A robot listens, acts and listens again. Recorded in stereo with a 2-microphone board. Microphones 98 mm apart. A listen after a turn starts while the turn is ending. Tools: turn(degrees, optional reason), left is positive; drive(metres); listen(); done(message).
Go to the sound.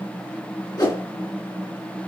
turn(degrees=40, reason="The whoosh: about 40° left or 140° left.")
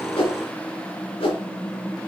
turn(degrees=95, reason="So it is at 95° left.")
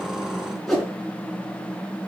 drive(metres=1.0)
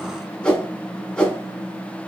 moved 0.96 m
turn(degrees=10, reason="The whoosh is now 10° left.")
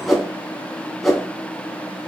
drive(metres=1.0)
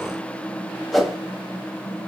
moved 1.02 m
drive(metres=1.0)
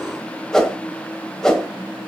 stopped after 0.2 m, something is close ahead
turn(degrees=10, reason="The whoosh is now 10° left.")
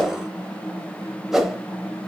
done("Arrived at the whoosh, straight ahead.")